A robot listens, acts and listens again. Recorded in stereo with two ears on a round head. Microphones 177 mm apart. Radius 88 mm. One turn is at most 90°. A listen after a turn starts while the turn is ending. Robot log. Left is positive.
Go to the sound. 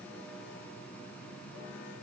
cmd idle
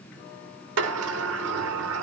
cmd yaw -90
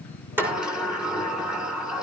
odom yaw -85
cmd fwd 1.0
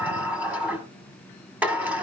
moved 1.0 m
note: The sliding door is now 10° right.
cmd yaw -10
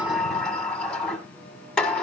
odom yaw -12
cmd fwd 1.0
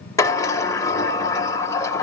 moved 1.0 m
note: The sliding door is now 15° left.
cmd yaw +15
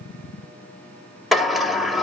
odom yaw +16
cmd fwd 1.0
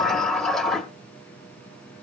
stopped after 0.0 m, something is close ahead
end: Arrived at the sliding door, straight ahead.